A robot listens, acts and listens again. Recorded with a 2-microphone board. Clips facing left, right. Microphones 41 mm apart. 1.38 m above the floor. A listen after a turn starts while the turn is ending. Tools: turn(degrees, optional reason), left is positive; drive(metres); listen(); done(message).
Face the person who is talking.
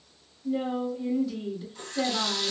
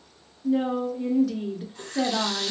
turn(degrees=-70, reason="The woman speaking: about 70° right or 110° right.")
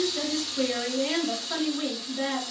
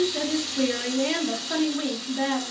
turn(degrees=-20, reason="So it is at 20° right.")
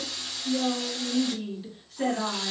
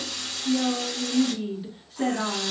done("Facing the woman speaking, 1 to 2 m away.")